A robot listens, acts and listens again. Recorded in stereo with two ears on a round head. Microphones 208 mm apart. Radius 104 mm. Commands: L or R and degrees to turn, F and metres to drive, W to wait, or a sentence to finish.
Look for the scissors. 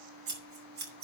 R45
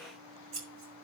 R85
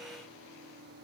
W
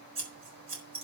R25
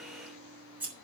R10
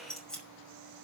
Found it: scissors, straight ahead.